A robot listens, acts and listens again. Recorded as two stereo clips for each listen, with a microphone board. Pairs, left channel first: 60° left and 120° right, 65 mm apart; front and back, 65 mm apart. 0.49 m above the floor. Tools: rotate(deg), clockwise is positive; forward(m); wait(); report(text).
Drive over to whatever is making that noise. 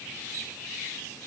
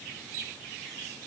wait()
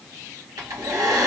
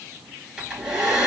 rotate(100)
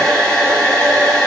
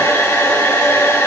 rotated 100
rotate(15)
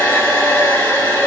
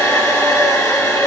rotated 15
forward(1.0)
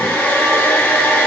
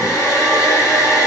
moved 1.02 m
forward(1.0)
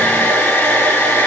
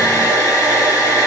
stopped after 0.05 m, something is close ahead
report("I am next to the hair dryer.")